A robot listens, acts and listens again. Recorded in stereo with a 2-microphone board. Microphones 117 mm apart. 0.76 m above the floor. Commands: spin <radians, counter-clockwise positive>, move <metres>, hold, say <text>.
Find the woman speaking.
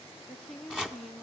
spin 0.52
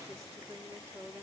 spin -0.52
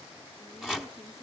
hold
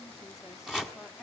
say Facing the woman speaking, 1 to 2 m away.